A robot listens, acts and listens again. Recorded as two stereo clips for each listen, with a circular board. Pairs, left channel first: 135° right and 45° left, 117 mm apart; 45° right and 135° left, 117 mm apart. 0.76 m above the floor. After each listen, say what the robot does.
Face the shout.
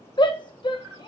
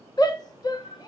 Turn 95° right.
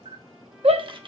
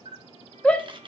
Turn 30° left.
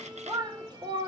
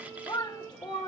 Found it: a shout, straight ahead.